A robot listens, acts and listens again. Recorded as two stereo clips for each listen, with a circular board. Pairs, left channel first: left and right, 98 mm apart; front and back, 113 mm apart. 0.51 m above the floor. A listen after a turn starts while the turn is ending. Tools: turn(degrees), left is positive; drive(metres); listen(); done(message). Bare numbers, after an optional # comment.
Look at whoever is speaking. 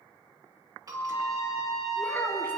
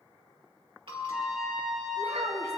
# The child speaking: 160° left.
turn(160)
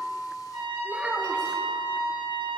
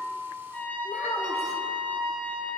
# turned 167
# The child speaking is now 10° right.
turn(-10)
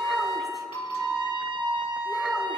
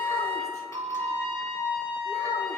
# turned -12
listen()
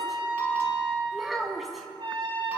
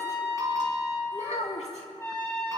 done("Facing the child speaking, 2 to 4 m away.")